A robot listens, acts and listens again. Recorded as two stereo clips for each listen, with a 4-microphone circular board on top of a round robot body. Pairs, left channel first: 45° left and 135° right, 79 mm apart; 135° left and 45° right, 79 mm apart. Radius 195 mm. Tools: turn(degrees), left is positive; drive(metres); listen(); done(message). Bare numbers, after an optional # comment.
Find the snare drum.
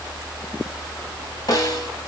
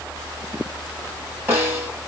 # The snare drum: 20° left.
turn(20)
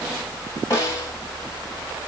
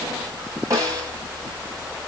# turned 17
done("Facing the snare drum.")